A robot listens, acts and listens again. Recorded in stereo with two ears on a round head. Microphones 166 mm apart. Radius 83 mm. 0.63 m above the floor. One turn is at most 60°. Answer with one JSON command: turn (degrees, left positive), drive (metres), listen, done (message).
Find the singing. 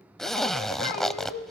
{"turn": 55}
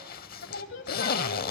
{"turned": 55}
{"turn": 60}
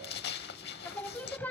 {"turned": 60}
{"turn": 10}
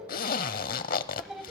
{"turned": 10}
{"done": "Found it: singing, straight ahead, 1 to 2 m away."}